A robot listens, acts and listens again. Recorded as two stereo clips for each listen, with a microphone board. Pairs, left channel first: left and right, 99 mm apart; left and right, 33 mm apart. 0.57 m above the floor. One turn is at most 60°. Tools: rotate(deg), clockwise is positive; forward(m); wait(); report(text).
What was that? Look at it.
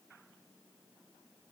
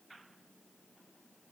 wait()
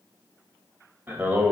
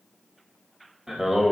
rotate(20)
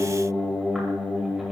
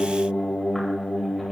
report("Facing the singing, 1 to 2 m away.")